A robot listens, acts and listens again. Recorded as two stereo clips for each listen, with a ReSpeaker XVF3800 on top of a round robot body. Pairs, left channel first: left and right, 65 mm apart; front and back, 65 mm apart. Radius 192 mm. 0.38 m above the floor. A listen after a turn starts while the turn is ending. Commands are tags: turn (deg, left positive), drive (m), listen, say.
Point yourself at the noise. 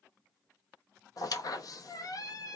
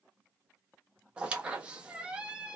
<turn deg="110"/>
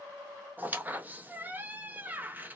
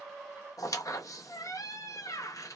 <turn deg="-30"/>
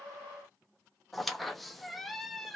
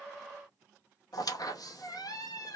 <say>Facing the squeak.</say>